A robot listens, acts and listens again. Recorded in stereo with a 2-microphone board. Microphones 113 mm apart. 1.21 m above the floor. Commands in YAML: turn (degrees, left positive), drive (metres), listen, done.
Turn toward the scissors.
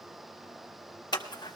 turn: 40
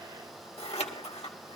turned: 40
turn: 95
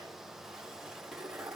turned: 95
done: "Facing the scissors, 1 to 2 m away."